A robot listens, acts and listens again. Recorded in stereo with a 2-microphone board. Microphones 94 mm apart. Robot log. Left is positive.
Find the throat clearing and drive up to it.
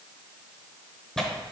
cmd idle
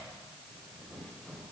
cmd idle
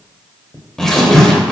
end: I can't make out throat clearing to turn to.